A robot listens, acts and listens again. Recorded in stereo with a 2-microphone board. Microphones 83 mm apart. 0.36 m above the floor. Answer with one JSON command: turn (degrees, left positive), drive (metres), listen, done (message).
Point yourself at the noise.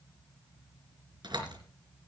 {"turn": -65}
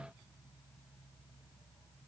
{"listen": true}
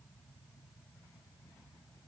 {"done": "I heard a door slam, but can't make it out now. It was about straight ahead or 50° right."}